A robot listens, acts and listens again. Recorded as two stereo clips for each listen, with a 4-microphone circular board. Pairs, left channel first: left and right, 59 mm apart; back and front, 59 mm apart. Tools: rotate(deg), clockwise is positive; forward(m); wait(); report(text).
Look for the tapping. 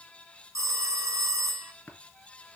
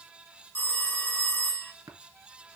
rotate(-25)
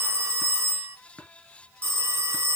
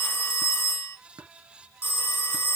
rotate(-15)
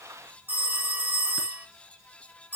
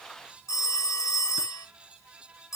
wait()
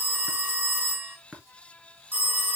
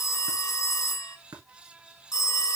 report("Facing the tapping, 2 to 4 m away.")